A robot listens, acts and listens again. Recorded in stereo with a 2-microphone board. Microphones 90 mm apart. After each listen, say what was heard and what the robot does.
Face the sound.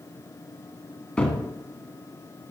Turn 30° left.
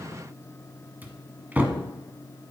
So it is at 20° right. Turn 20° right.
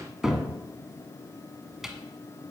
Found it: a cupboard door, straight ahead, 1 to 2 m away.